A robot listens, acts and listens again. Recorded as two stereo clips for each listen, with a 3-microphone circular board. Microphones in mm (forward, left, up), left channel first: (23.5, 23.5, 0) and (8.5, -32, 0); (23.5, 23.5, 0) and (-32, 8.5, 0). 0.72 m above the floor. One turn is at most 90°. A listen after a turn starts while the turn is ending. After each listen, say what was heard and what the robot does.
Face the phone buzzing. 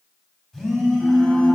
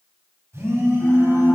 The phone buzzing: 155° left. Turn 90° left.
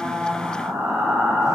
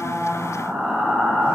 Nothing new. It was at 65° left. Turn 65° left.
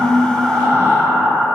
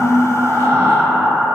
Keep listening.
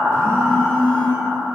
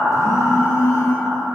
Found it: a phone buzzing, straight ahead.